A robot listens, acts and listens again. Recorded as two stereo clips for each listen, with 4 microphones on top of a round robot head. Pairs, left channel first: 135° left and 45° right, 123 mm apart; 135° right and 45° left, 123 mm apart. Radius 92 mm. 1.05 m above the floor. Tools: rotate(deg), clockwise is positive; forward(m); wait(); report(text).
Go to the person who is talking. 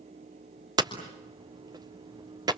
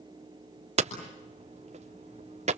wait()
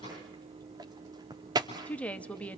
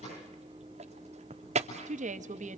rotate(-55)
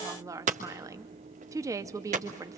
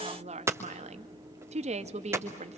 rotate(-20)
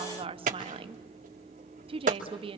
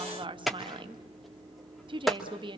forward(1.0)
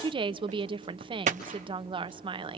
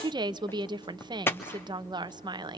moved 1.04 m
forward(1.0)
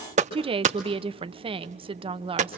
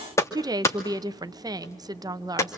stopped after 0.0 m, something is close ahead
rotate(10)
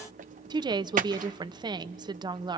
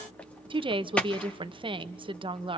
report("Arrived at the woman speaking, straight ahead.")